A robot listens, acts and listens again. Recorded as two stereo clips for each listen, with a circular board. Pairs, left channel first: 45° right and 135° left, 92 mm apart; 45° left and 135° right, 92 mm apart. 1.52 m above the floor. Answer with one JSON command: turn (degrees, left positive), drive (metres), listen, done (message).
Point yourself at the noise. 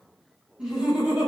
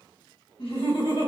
{"turn": 55}
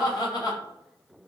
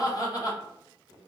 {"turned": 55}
{"done": "Found it: laughter, straight ahead, 1 to 2 m away."}